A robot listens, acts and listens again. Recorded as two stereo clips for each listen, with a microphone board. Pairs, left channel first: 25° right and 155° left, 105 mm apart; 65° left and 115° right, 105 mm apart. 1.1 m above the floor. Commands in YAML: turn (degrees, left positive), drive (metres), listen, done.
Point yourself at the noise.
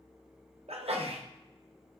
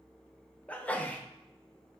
turn: 145
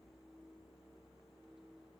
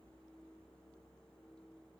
done: "I heard a sneeze from this way, but can't make it out now."